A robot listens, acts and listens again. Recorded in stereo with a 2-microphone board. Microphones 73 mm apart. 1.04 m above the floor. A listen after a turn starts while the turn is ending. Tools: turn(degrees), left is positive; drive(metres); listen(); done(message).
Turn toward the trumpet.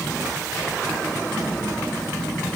listen()
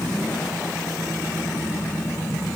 listen()
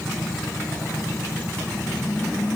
done("I can't make out a trumpet.")